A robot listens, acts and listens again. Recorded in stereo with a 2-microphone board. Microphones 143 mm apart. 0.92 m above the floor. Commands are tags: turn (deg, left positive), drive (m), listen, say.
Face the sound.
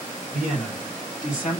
<turn deg="-30"/>
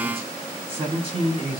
<turn deg="-140"/>
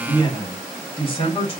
<turn deg="35"/>
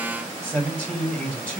<say>Found it: a man speaking, straight ahead, 1 to 2 m away.</say>